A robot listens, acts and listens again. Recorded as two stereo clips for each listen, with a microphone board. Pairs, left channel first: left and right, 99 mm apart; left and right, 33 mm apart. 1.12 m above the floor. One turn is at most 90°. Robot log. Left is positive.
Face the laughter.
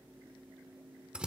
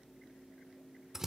cmd idle
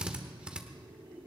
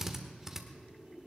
note: The laughter: about 55° right or 125° right.
cmd yaw -55
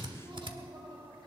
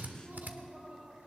note: So it is at 75° right.
cmd yaw -75
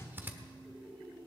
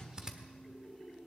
end: Facing the laughter, over 4 m away.